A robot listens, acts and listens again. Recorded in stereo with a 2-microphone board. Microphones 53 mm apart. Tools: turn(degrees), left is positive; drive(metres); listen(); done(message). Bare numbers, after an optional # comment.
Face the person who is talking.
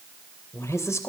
# The woman speaking: about 65° left or 115° left.
turn(65)
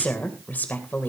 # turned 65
# So it is at 35° left.
turn(35)
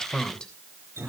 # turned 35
# The woman speaking is now 20° left.
turn(20)
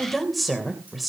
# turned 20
done("Facing the woman speaking.")